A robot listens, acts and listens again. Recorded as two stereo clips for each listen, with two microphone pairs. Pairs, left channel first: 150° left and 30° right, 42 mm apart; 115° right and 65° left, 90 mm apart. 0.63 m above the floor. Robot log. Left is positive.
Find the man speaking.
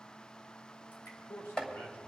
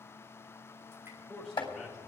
note: The man speaking: 160° left.
cmd yaw +160
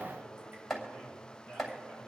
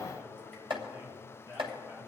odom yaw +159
end: Facing the man speaking.